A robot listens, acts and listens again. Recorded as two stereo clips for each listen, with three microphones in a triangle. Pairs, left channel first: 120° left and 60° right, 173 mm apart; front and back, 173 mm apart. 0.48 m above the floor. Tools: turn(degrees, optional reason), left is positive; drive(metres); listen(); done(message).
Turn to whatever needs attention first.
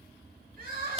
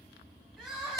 turn(degrees=-95, reason="The crying: 95° right.")
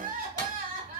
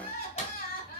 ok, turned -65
turn(degrees=-30, reason="The crying is now 30° right.")
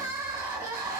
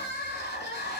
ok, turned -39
turn(degrees=10, reason="The crying is now 10° left.")
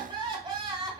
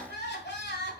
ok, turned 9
done("Found it: crying, straight ahead, 1 to 2 m away.")